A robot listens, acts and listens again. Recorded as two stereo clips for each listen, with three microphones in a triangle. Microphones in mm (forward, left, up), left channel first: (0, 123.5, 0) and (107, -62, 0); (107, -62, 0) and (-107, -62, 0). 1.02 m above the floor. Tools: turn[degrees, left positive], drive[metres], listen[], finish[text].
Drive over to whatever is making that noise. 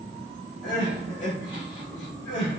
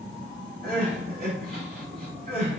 Thought: The crying: 140° left.
Action: turn[140]
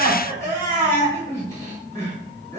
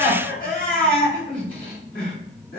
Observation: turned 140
Thought: The crying is now 45° left.
Action: turn[45]
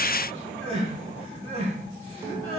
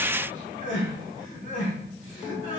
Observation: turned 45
Action: drive[1.0]
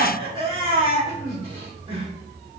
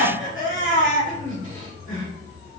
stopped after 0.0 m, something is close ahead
Action: finish[Blocked. The crying is further on, straight ahead.]